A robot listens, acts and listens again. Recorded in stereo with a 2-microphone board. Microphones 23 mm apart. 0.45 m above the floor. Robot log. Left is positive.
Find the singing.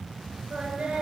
note: The singing: about 50° right or 130° right.
cmd yaw -50
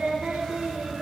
note: So it is at 80° right.
cmd yaw -80
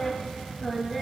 end: Facing the singing, 2 to 4 m away.